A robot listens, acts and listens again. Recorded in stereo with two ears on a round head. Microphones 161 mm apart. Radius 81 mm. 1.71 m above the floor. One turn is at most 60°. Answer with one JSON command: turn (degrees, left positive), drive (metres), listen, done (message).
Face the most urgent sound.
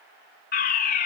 {"turn": 55}
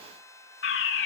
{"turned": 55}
{"turn": 60}
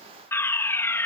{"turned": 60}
{"turn": 15}
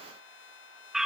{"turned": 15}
{"done": "Facing the fire alarm."}